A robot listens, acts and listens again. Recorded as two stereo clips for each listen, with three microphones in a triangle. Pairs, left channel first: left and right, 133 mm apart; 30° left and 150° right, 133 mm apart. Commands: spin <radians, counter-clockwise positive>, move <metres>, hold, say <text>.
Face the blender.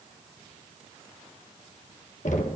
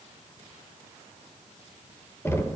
hold
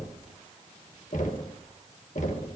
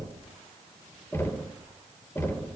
hold
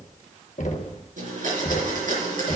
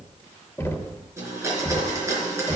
spin -1.40
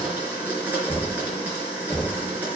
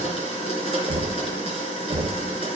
spin -0.26
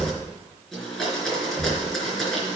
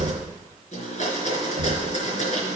say Facing the blender.